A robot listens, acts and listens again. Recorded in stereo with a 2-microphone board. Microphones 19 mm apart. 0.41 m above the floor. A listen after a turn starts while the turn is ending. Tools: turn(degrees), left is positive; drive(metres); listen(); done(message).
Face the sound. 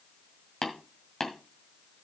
turn(degrees=35)
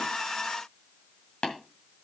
turn(degrees=110)
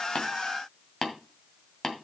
turn(degrees=25)
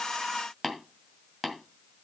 done("Facing the tapping, 2 to 4 m away.")